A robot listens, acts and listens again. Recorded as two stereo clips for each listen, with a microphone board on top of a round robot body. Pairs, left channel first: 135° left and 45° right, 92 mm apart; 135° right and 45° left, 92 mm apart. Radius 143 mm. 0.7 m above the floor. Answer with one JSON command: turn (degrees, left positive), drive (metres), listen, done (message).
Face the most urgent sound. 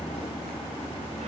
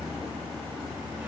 {"listen": true}
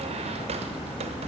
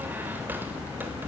{"listen": true}
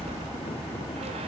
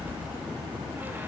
{"done": "I can't make out anything urgent, only a squeak."}